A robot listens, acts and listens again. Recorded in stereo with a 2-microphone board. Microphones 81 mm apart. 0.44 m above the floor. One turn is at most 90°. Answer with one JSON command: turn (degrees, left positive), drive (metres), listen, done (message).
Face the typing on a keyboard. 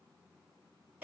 {"listen": true}
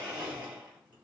{"listen": true}
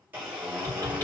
{"turn": 30}
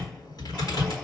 {"turn": 90}
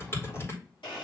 {"turn": 35}
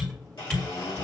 {"turn": 10}
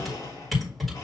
{"done": "Found it: typing on a keyboard, straight ahead."}